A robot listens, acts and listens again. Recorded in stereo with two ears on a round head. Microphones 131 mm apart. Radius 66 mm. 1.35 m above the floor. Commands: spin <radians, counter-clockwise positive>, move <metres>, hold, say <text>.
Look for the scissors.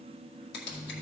spin 1.57
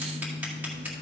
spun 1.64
hold
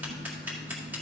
spin -0.17
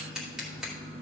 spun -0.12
say Facing the scissors.